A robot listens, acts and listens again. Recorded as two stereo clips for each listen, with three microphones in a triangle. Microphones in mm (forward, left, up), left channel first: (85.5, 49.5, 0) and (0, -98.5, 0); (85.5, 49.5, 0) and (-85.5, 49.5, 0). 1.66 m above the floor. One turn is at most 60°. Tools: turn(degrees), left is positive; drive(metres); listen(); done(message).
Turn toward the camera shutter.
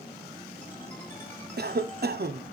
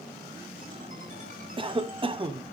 listen()
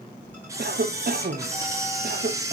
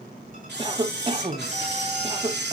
turn(degrees=60)
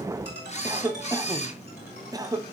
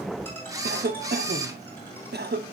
turn(degrees=60)
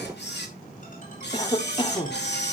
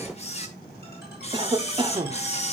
turn(degrees=55)
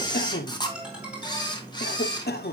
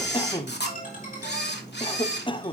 done("Found it: a camera shutter, straight ahead.")